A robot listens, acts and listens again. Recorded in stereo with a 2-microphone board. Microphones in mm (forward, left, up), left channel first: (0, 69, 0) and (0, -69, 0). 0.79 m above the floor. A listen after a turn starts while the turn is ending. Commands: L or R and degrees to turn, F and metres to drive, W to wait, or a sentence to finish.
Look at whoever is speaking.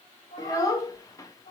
L25
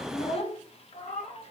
L125
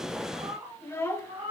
L20
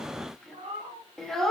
Facing the child speaking.